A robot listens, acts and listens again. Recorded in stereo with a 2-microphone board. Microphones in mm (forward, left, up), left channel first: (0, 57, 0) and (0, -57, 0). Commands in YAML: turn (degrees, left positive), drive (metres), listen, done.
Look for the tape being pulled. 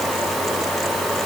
listen: true
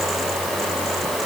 listen: true
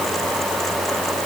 done: "I can't make out tape being pulled to turn to."